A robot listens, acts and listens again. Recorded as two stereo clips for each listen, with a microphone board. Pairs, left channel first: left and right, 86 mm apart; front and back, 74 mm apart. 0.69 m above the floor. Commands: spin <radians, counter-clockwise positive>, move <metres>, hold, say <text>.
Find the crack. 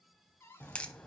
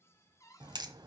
spin 2.88
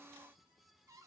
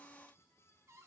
say Facing where the crack came from. I can't hear it now.